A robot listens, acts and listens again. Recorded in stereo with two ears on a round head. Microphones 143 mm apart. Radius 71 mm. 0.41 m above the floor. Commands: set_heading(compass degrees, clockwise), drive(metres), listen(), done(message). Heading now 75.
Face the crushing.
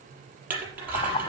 set_heading(105)
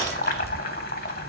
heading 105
set_heading(85)
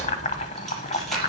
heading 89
done("Facing the crushing.")